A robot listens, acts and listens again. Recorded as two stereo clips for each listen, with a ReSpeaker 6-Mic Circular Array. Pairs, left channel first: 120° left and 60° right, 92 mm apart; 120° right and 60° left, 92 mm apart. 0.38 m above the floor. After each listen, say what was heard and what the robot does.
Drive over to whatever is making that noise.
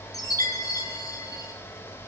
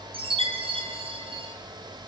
The chime: 70° left. Turn 70° left.
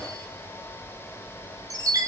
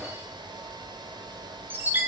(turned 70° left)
The chime is now 10° right. Turn 10° right.
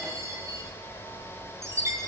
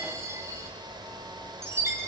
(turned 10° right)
Drive 1.0 m forward.
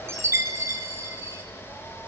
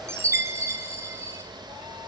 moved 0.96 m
Drive 1.0 m forward.
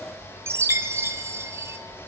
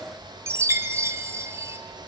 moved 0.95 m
Drive 1.0 m forward.
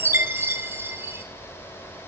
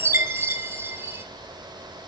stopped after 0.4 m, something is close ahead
Arrived at the chime, straight ahead.